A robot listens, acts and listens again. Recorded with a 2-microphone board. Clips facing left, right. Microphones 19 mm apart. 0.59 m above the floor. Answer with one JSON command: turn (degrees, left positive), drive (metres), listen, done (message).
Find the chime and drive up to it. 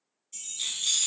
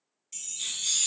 {"turn": -55}
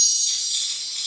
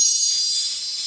{"turn": -65}
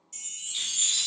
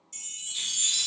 {"drive": 1.0}
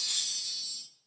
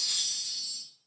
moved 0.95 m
{"turn": -10}
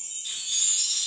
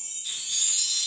{"drive": 1.0}
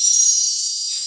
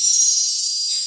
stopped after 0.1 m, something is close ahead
{"done": "Arrived at the chime, straight ahead."}